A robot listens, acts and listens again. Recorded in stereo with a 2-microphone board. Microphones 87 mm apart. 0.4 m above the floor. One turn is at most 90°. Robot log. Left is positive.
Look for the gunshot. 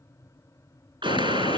note: The gunshot: about 65° right or 115° right.
cmd yaw -65
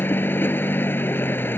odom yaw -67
cmd idle
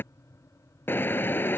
end: I heard a gunshot, but can't make it out now. It was about straight ahead or 45° right.